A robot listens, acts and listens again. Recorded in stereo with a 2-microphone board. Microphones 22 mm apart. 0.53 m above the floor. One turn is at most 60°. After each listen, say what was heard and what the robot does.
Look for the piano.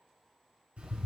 Keep listening.
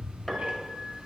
Turn 30° left.
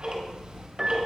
So it is at 20° right. Turn 20° right.
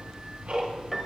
Facing the piano, under 1 m away.